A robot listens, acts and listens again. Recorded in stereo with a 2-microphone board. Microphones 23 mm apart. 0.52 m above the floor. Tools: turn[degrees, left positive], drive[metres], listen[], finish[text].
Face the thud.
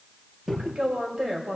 Thought: The thud: about 20° right or 160° right.
Action: turn[-20]
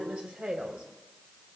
Action: listen[]
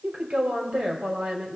Action: finish[I heard a thud, but can't make it out now. It was about straight ahead or 140° right.]